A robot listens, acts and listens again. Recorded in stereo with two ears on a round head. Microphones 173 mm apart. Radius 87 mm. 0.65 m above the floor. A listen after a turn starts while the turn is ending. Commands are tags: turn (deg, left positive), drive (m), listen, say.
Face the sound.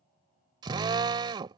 <turn deg="-25"/>
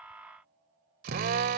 <turn deg="-130"/>
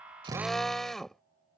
<say>Found it: a drill, straight ahead.</say>